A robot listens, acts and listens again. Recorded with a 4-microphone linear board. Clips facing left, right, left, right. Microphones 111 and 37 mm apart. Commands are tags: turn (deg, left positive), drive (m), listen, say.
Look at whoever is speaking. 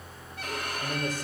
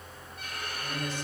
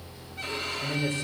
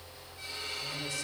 <turn deg="40"/>
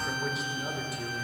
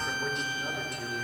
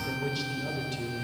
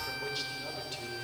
<say>Facing the man speaking, 2 to 4 m away.</say>